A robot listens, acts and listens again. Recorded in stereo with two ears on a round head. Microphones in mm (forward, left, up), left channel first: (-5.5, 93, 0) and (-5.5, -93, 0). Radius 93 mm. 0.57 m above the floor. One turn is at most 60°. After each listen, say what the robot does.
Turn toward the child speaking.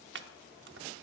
Keep listening.
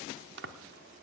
Keep listening.
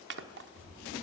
Turn 60° right.
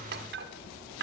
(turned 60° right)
Turn 10° right.
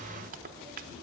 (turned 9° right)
Turn 10° left.
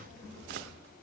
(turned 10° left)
Facing the child speaking.